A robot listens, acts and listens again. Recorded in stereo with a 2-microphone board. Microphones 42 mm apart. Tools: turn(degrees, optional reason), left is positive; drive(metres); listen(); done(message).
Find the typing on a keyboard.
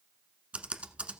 turn(degrees=-30, reason="The typing on a keyboard: about 30° right or 150° right.")
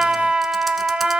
listen()
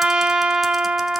listen()
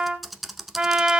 done("Facing the typing on a keyboard, 1 to 2 m away.")